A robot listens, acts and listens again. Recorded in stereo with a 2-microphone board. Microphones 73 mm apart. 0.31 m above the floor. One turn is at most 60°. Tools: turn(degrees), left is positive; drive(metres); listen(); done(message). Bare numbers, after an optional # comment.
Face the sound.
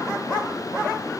listen()
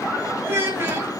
# The child speaking: about 30° right or 150° right.
turn(-30)
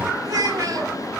# So it is at 110° right.
turn(-60)
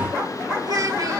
# The child speaking is now 75° right.
turn(-60)
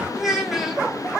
done("Found it: a child speaking, straight ahead, 1 to 2 m away.")